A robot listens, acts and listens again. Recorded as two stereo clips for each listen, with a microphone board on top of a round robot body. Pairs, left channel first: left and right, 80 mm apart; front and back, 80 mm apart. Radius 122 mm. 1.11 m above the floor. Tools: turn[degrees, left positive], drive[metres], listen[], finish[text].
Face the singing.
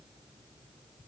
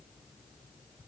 Action: listen[]
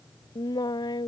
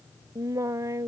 Thought: The singing: 125° left.
Action: turn[125]
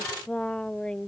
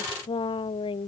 Thought: The singing is now 10° left.
Action: turn[10]
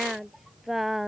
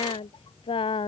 Action: finish[Found it: singing, straight ahead.]